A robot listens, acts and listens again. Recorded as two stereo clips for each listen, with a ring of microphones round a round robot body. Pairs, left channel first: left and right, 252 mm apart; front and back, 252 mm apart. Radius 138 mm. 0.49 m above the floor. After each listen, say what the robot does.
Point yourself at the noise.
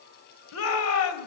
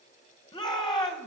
Turn 75° left.
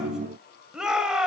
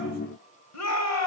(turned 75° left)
Facing the shout.